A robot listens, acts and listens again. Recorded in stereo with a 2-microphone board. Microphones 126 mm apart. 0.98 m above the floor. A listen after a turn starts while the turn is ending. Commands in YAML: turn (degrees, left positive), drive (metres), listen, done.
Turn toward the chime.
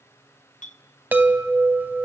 turn: -30
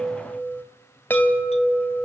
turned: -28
turn: 15
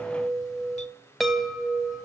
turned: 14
done: "Facing the chime, 2 to 4 m away."